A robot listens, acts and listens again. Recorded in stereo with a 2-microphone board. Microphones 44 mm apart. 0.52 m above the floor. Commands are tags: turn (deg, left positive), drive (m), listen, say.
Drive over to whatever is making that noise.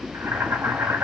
<turn deg="-55"/>
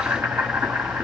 <turn deg="-65"/>
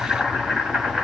<turn deg="-20"/>
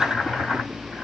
<turn deg="-10"/>
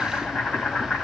<drive m="1.0"/>
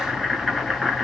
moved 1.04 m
<drive m="1.0"/>
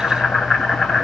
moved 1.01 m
<turn deg="10"/>
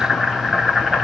<drive m="1.0"/>
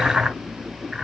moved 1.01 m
<drive m="1.0"/>
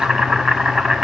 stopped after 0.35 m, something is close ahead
<say>Arrived at the boiling, straight ahead.</say>